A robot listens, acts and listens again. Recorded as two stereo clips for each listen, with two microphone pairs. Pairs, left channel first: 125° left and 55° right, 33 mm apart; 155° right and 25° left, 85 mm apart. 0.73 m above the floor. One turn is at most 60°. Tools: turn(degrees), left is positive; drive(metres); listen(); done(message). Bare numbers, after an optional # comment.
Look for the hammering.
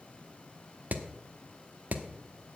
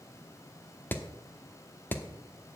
# The hammering: 90° right.
turn(-60)
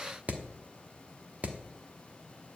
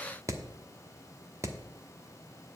# The hammering is now 25° right.
turn(-25)
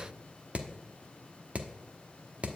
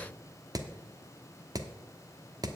# The hammering is now 15° right.
turn(-15)
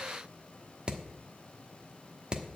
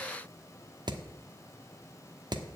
done("Found it: hammering, straight ahead.")